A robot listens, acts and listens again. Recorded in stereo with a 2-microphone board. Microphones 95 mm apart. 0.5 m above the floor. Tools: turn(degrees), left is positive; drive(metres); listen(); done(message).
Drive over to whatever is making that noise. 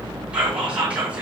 turn(degrees=-30)
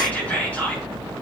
turn(degrees=20)
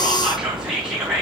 turn(degrees=-10)
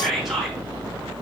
drive(metres=1.0)
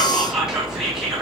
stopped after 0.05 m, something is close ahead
done("Something is in my way. I am facing the whispering but have not reached it.")